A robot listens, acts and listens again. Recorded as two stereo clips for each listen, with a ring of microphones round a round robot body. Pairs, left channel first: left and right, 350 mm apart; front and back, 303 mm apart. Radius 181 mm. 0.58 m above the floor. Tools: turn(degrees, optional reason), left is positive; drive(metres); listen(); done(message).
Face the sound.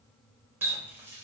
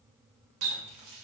turn(degrees=-175, reason="The running tap: 175° right.")
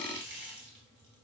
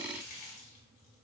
turn(degrees=-30, reason="The running tap is now 30° right.")
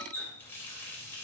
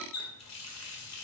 done("Found it: a running tap, straight ahead, 1 to 2 m away.")